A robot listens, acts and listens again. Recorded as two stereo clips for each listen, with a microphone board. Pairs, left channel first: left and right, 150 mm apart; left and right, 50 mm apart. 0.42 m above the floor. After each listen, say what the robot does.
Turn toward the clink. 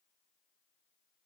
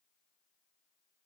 Keep listening.
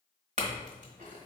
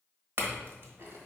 Turn 55° right.
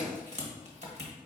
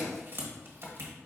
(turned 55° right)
Turn 60° right.
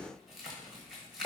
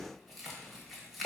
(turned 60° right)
Facing the clink.